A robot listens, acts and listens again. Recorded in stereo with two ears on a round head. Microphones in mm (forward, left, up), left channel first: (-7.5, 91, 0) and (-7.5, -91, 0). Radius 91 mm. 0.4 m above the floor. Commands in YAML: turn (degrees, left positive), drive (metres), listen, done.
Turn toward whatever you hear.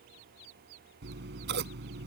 turn: -60
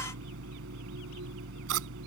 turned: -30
turn: -90
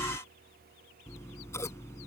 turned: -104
turn: 15
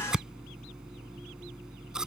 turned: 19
done: "Found it: scissors, straight ahead."